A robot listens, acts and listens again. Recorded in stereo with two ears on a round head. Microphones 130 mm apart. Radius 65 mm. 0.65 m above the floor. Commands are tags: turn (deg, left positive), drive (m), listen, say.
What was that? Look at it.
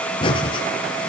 <turn deg="35"/>
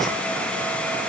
<listen/>
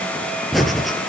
<say>Facing the breathing.</say>